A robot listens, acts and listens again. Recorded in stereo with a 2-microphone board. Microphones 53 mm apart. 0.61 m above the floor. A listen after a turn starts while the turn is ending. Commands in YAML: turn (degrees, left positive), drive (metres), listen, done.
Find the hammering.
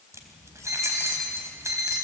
listen: true
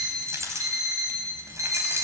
listen: true
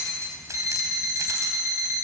done: "I can't make out hammering to turn to."